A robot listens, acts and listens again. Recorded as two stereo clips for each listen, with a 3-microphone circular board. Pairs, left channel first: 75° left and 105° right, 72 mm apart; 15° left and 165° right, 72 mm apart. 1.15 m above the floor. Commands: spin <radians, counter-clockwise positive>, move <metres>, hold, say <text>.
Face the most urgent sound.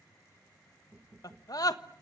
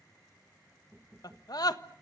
spin 0.79
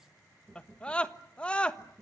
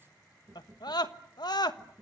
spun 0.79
say Found it: a scream, straight ahead, 1 to 2 m away.